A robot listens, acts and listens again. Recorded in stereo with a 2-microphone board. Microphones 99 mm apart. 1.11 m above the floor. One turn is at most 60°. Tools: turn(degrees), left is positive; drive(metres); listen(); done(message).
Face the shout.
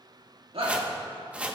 turn(degrees=-60)
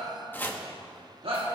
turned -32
turn(degrees=-60)
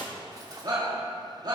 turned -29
turn(degrees=-45)
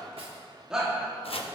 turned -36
turn(degrees=-10)
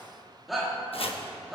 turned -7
done("Facing the shout, 2 to 4 m away.")